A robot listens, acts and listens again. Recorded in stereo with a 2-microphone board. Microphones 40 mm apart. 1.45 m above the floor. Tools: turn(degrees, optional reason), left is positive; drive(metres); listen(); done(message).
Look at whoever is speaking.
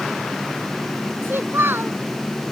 turn(degrees=-70, reason="The child speaking: about 70° right or 110° right.")
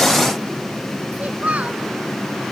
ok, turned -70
turn(degrees=-40, reason="So it is at 40° right.")
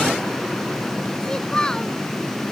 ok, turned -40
turn(degrees=15, reason="The child speaking is now 15° left.")
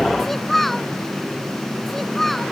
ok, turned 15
done("Facing the child speaking.")